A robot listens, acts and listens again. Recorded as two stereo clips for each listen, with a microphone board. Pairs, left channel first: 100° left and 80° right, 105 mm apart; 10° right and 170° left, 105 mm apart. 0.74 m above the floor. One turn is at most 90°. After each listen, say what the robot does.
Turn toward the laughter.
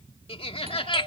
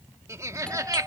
Turn 90° left.
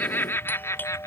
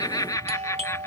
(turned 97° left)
Turn 45° left.
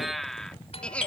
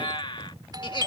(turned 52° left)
Turn 25° left.
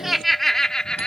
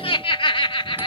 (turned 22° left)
Turn 20° left.
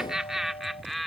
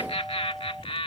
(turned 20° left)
Turn 10° left.
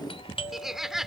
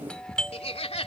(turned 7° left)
Found it: laughter, straight ahead.